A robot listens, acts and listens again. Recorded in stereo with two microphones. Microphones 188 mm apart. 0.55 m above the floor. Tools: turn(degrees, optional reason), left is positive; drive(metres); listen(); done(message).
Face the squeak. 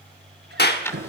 turn(degrees=-65, reason="The squeak: about 65° right or 115° right.")
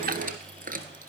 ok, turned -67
turn(degrees=-50, reason="So it is at 50° right.")
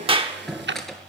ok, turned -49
done("Facing the squeak.")